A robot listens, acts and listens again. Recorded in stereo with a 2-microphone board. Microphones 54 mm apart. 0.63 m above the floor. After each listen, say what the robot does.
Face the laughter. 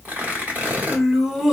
Turn 30° right.
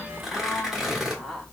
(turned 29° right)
Turn 30° left.
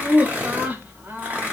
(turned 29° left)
Turn 40° right.
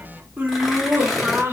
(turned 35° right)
Turn 45° right.
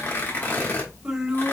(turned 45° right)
Turn 10° right.
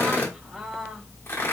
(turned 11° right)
Facing the laughter.